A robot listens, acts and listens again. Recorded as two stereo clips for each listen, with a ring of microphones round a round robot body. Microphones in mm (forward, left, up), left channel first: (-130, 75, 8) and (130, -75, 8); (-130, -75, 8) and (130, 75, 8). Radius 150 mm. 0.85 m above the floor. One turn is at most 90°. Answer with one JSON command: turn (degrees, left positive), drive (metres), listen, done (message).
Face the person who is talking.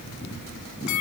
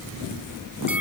{"listen": true}
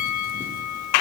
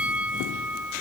{"listen": true}
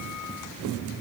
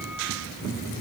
{"done": "I can't make out anyone speaking, only a bell."}